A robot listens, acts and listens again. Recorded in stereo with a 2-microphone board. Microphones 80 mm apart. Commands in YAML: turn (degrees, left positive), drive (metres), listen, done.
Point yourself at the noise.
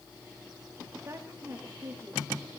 turn: -35
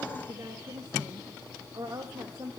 turn: -130
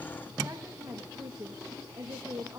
turn: -45
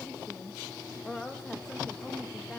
done: "Facing the woman speaking, 2 to 4 m away."